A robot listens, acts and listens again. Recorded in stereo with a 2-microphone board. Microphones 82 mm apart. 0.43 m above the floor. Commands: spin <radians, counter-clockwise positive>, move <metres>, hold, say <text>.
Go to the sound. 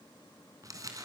spin -0.70
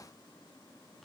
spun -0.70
hold
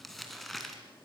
move 1.0
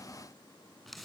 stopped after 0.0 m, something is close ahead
say Blocked. The crumpling is further on, straight ahead.